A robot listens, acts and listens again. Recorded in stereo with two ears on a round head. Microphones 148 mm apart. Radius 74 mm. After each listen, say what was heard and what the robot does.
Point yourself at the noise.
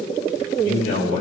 Turn 90° left.
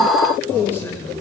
So it is at 15° left. Turn 15° left.
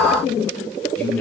The man speaking is now 10° left. Turn 10° left.
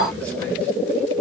Keep listening.
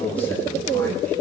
Keep listening.
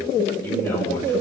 The man speaking is now 15° left. Turn 15° left.
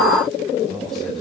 Keep listening.
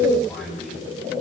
Found it: a man speaking, straight ahead.